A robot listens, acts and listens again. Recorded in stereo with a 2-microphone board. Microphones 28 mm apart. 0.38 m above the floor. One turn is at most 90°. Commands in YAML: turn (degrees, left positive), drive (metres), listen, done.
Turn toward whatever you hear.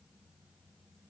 listen: true
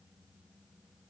listen: true
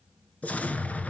turn: 60
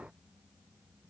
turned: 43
listen: true
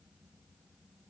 done: "I heard an explosion, but can't make it out now. It was about 15° left or 80° left."